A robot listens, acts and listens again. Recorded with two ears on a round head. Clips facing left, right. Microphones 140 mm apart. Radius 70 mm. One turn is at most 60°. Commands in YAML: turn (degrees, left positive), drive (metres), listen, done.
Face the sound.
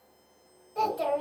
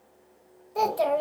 turn: -60
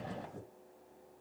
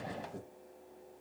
turn: -45
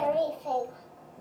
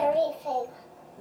turn: -10
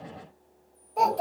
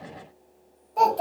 done: "Facing the child speaking."